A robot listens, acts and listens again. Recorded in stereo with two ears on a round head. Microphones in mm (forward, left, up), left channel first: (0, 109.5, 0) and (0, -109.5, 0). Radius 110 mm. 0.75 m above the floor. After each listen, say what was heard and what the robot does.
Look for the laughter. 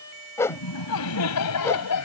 Turn 90° left.
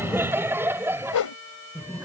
So it is at 10° right. Turn 10° right.
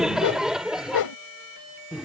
Found it: laughter, straight ahead.